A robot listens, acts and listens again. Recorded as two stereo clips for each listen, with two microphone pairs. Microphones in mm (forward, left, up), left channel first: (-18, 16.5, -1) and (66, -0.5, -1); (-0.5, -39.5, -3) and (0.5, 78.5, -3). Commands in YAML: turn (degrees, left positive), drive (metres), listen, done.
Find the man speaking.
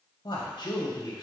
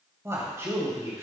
turn: 155
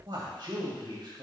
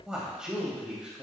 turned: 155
done: "Facing the man speaking, 2 to 4 m away."